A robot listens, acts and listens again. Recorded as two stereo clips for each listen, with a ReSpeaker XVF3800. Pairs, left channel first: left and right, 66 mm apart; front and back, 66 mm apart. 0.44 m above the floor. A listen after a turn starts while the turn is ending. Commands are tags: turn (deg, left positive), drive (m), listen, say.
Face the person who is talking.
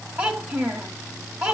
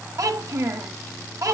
<turn deg="-150"/>
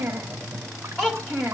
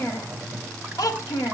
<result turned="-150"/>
<say>Found it: a child speaking, straight ahead.</say>